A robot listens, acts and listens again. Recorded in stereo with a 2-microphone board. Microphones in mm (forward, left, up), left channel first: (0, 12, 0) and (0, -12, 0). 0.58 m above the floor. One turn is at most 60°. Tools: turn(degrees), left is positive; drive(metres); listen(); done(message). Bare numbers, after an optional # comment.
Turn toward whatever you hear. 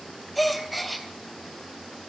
turn(30)
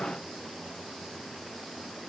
listen()
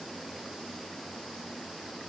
done("I heard a gasp, but can't make it out now. It was about 30° right or 150° left.")